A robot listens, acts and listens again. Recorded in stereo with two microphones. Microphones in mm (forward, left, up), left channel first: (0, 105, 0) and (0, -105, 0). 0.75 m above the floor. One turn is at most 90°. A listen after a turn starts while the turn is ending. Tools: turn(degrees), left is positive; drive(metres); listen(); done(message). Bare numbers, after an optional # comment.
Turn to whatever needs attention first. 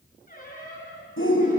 # The shout: about 75° left or 105° left.
turn(75)
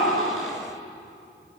listen()
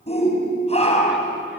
# So it is at 30° left.
turn(30)
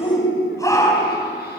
# The shout is now 15° left.
turn(15)
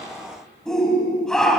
done("Found it: a shout, straight ahead, over 4 m away.")